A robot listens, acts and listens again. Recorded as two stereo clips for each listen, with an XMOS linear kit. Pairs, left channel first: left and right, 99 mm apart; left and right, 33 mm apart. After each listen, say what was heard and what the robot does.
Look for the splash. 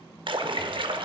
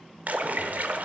The splash: about 55° right or 125° right. Turn 55° right.
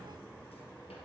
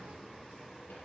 Keep listening.
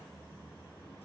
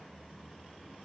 I heard a splash, but can't make it out now. It was about straight ahead or 70° right.